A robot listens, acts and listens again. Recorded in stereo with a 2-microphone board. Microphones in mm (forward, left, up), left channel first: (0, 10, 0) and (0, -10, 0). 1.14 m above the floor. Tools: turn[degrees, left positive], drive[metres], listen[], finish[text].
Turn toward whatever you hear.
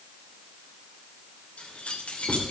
Action: turn[90]
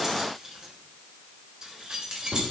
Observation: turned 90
Thought: So it is at 40° right.
Action: turn[-40]
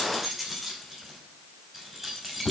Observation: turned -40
Thought: The keys jangling is now 15° right.
Action: turn[-15]
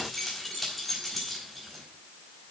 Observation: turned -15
Action: finish[Found it: keys jangling, straight ahead.]